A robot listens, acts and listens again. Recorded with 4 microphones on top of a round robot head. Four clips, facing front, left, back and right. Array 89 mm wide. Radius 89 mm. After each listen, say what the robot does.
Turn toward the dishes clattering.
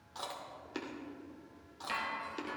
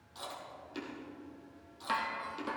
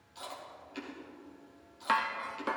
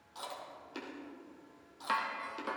Turn 170° right.
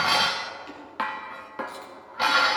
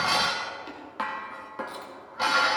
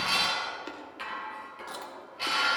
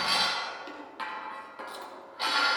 Turn 25° left.
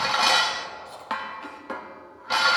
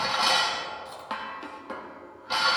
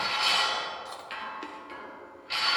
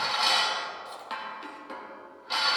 Turn 15° left.
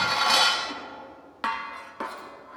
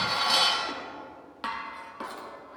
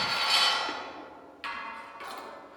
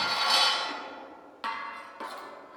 Facing the dishes clattering, 1 to 2 m away.